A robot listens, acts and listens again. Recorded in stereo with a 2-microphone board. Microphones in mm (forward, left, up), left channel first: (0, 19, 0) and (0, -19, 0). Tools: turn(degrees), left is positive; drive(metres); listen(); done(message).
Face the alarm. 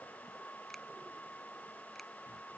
listen()
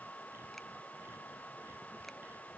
listen()
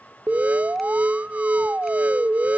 turn(degrees=-40)
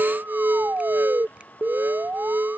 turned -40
turn(degrees=-95)
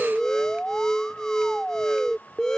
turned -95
turn(degrees=15)
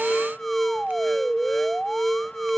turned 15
done("Facing the alarm.")